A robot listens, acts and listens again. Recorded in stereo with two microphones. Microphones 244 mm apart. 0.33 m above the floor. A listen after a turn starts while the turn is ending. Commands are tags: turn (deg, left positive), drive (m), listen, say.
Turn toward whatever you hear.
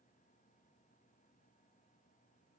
<listen/>
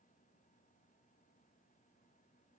<listen/>
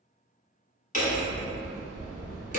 <turn deg="30"/>
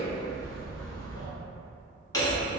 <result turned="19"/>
<turn deg="15"/>
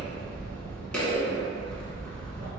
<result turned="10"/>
<say>Found it: hammering, straight ahead, 1 to 2 m away.</say>